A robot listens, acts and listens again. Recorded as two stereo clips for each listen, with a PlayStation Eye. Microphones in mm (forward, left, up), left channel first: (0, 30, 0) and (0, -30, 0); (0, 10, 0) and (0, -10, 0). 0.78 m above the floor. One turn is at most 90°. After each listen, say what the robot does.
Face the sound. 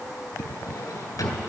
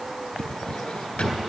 Turn 90° left.
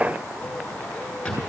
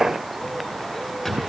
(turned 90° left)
Turn 15° left.
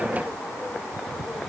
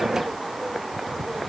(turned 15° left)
Keep listening.
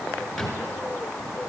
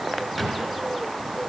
Found it: a drawer, straight ahead, 2 to 4 m away.